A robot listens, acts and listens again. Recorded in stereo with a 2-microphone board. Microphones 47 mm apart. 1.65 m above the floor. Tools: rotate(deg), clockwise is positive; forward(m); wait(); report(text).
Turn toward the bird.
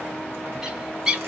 rotate(30)
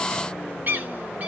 rotate(135)
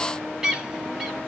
rotate(15)
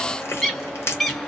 report("Facing the bird.")